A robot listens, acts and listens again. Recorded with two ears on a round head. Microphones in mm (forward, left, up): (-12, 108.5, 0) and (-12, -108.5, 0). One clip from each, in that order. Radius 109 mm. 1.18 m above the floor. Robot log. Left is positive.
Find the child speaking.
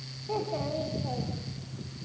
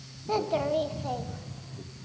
note: The child speaking: about 35° right or 145° right.
cmd yaw -35
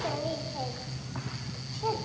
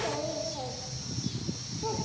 cmd idle
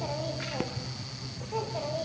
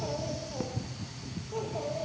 note: So it is at 40° left.
cmd yaw +40
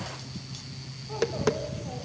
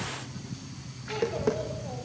cmd idle
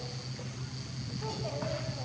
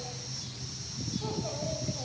cmd idle
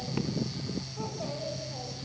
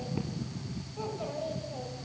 end: Facing the child speaking.